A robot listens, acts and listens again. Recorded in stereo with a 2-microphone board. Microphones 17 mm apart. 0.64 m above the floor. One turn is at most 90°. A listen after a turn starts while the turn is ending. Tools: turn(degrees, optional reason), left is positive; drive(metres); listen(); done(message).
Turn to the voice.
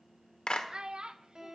turn(degrees=-55, reason="The child speaking: about 55° right or 125° right.")
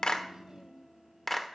turn(degrees=-45, reason="So it is at 45° right.")
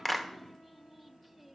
listen()
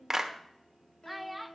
done("Facing the child speaking, under 1 m away.")